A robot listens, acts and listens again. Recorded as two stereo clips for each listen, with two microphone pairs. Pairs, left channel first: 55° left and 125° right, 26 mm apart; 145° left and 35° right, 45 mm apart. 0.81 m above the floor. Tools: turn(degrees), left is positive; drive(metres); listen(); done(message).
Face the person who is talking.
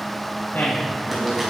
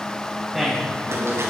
turn(degrees=45)
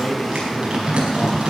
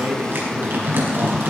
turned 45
done("Facing the man speaking.")